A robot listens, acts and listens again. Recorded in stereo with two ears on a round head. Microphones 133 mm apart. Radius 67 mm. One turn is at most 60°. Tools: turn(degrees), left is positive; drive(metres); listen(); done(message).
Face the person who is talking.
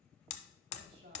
turn(degrees=-60)
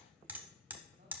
listen()
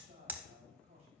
turn(degrees=-50)
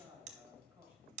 turn(degrees=-10)
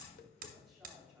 done("Found it: a man speaking, straight ahead, 2 to 4 m away.")